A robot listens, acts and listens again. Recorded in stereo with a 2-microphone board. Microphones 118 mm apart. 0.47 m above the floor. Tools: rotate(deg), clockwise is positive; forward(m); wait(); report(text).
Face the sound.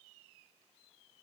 wait()
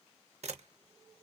rotate(65)
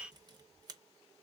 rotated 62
rotate(35)
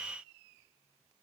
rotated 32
wait()
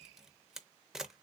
report("Facing the camera shutter, under 1 m away.")